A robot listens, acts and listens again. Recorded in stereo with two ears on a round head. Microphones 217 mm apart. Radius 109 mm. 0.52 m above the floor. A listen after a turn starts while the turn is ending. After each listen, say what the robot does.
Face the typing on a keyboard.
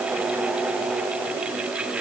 Keep listening.
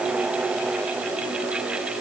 Keep listening.
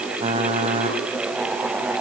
Turn 25° right.
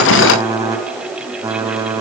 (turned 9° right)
Turn 30° right.
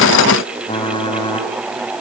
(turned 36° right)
Turn 20° left.
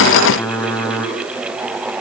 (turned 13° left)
Turn 10° left.
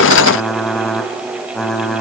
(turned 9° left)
Found it: typing on a keyboard, straight ahead, 2 to 4 m away.